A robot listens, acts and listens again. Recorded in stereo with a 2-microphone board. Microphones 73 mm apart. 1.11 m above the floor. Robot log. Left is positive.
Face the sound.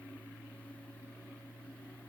cmd idle
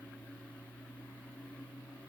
cmd idle
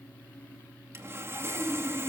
note: The sawing: about 35° right or 145° right.
cmd yaw -35
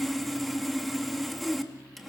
end: Found it: sawing, straight ahead, 2 to 4 m away.